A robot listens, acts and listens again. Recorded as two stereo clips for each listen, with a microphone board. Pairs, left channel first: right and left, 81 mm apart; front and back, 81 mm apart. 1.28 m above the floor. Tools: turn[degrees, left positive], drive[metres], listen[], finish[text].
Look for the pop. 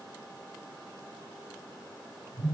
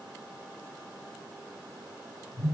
Action: listen[]
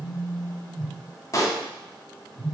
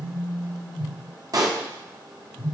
Thought: The pop: 140° right.
Action: turn[-140]
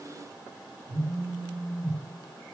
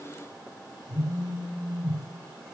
Action: finish[I heard a pop from this way, but can't make it out now.]